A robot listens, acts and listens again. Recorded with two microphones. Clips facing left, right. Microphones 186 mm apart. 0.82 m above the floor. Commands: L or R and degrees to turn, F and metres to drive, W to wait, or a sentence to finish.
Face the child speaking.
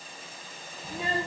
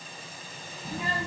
L35
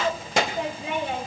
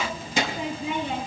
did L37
L90
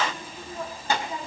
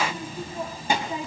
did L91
R15
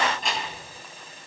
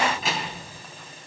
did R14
Facing the child speaking, over 4 m away.